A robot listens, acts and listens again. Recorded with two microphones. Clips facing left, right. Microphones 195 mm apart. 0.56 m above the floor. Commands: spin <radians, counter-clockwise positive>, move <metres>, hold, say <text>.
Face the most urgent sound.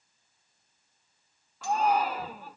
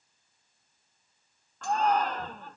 spin 0.52
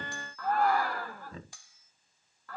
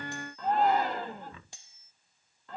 spin -0.35
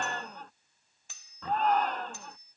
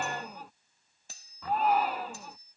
spin -0.17
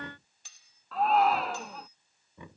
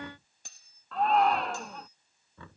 say Facing the shout.